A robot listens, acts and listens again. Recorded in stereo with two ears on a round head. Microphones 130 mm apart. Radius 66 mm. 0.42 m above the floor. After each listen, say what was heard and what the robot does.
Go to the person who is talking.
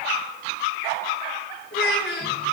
Turn 90° left.
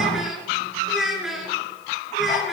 Drive 1.0 m forward.
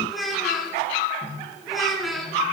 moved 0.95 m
Drive 1.0 m forward.
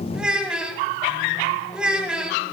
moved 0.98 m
Drive 1.0 m forward.
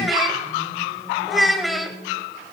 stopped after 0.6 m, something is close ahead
I am next to the child speaking.